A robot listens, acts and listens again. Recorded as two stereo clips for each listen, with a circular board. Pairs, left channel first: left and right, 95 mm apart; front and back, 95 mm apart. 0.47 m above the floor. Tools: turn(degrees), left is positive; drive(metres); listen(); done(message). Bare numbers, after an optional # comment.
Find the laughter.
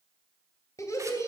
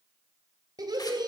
# The laughter: 145° left.
turn(145)
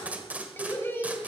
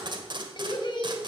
# The laughter is now 30° left.
turn(30)
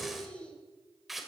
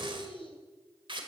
# The laughter is now 15° left.
turn(15)
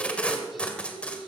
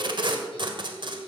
done("Facing the laughter.")